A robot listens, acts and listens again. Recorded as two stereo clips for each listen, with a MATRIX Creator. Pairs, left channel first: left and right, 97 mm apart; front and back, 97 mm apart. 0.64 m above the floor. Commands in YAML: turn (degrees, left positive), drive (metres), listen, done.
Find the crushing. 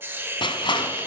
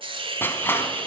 turn: 65
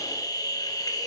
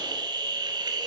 listen: true
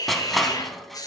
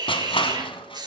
done: "Found it: crushing, straight ahead."